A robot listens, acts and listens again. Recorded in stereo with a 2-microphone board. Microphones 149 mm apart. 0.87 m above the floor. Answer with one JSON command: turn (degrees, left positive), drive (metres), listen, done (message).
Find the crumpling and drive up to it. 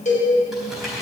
{"turn": 30}
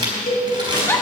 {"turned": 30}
{"turn": -30}
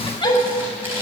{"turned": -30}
{"turn": -15}
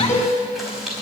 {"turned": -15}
{"drive": 1.0}
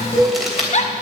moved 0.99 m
{"drive": 1.0}
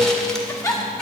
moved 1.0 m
{"listen": true}
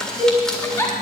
{"drive": 1.0}
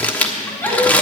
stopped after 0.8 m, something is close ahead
{"turn": 10}
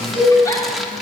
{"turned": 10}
{"done": "I am next to the crumpling."}